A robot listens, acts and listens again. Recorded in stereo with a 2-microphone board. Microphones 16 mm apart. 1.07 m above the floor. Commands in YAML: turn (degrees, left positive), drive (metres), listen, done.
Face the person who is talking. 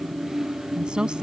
turn: -90
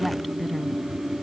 done: "Facing the woman speaking."